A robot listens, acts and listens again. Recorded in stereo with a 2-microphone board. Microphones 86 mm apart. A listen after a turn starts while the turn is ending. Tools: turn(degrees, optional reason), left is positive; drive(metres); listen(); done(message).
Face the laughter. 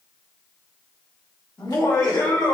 turn(degrees=40, reason="The laughter: about 40° left or 140° left.")
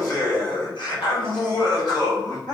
turn(degrees=125, reason="So it is at 125° left.")
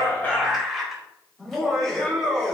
done("Facing the laughter, 2 to 4 m away.")